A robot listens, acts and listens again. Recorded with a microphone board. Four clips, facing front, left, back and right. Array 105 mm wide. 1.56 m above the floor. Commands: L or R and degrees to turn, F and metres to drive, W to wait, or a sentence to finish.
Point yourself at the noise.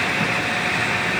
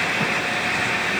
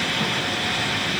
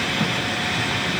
W
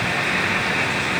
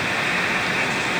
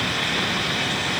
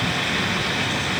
W
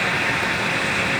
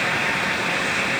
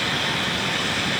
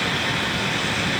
I can't make out anything.